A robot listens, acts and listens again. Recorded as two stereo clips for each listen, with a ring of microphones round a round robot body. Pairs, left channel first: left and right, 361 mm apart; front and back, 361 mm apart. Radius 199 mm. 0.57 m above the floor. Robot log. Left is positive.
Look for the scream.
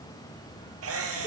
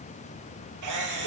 cmd idle
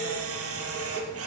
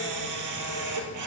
cmd idle
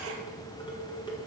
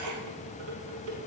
end: I can't make out a scream to turn to.